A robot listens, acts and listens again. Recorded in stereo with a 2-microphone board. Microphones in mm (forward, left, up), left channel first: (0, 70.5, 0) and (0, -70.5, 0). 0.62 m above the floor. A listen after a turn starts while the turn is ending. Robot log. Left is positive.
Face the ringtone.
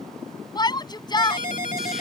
note: The ringtone: about 65° left or 115° left.
cmd yaw +65
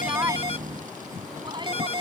note: So it is at 45° left.
cmd yaw +45
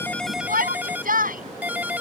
note: The ringtone is now 10° right.
cmd yaw -10
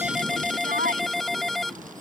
end: Found it: a ringtone, straight ahead.